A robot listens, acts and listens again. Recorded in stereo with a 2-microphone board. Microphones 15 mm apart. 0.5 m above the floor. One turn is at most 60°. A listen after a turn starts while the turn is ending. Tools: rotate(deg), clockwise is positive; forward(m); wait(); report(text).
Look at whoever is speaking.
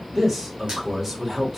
rotate(15)
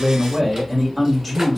report("Facing the man speaking, 1 to 2 m away.")